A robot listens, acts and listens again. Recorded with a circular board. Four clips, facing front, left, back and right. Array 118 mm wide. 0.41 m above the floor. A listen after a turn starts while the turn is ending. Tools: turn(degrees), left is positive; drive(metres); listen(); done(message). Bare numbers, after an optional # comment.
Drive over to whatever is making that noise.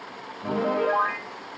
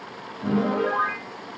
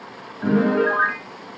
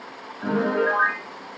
# The piano: 160° right.
turn(-160)
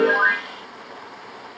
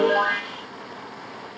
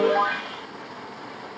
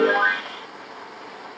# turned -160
listen()
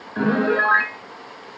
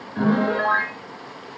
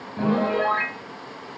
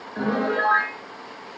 # The piano is now 10° right.
turn(-10)
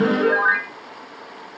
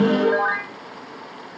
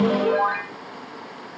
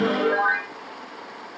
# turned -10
drive(1.0)
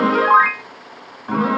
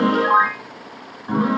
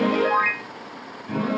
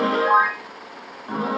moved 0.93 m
drive(1.0)
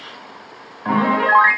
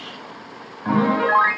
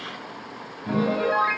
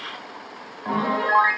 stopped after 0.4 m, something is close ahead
done("Arrived at the piano, straight ahead.")